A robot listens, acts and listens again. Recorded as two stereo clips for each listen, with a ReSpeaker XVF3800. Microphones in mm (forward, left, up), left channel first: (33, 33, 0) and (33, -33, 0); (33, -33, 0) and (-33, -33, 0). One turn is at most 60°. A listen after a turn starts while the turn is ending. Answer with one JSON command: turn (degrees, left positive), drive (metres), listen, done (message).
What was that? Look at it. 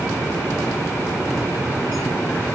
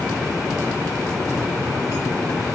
{"listen": true}
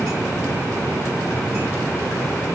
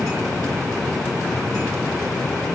{"listen": true}
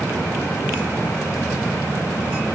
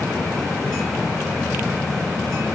{"done": "I can't make out anything."}